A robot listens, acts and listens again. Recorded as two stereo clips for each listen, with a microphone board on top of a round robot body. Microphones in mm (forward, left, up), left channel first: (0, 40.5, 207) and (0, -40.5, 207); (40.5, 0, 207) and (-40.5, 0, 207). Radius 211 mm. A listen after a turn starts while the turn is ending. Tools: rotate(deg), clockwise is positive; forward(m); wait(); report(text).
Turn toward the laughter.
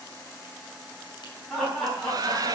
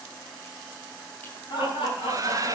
report("Found it: laughter, straight ahead.")